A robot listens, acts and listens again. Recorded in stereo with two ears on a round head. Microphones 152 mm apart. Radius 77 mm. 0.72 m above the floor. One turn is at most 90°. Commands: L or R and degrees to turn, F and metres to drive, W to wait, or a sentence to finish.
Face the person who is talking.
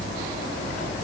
W
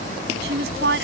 R65
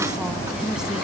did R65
W
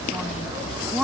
Facing the woman speaking.